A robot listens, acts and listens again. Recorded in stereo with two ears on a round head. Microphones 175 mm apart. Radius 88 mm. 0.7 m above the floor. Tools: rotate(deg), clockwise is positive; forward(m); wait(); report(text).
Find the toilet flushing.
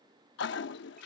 rotate(-60)
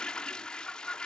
report("Facing the toilet flushing.")